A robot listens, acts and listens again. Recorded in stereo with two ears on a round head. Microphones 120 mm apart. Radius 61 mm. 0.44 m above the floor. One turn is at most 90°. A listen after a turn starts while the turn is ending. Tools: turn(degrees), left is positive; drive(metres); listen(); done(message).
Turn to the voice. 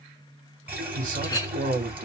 turn(degrees=-60)
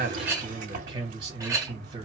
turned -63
turn(degrees=-35)
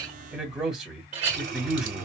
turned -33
done("Found it: a man speaking, straight ahead.")